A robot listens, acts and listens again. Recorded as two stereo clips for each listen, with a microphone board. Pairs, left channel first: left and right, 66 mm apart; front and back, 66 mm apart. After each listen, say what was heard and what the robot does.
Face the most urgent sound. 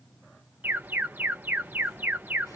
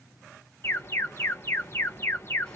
The alarm: 40° right. Turn 40° right.
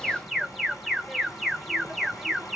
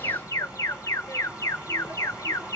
Found it: an alarm, straight ahead, 1 to 2 m away.